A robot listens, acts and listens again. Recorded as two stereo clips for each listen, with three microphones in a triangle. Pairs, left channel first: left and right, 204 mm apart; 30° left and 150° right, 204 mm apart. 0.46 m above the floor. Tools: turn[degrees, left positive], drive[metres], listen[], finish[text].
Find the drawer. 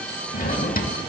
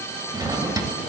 Thought: The drawer: 140° left.
Action: turn[140]
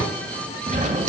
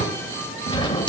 Thought: The drawer is now 40° right.
Action: turn[-40]
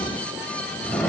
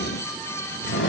Action: finish[Found it: a drawer, straight ahead, 1 to 2 m away.]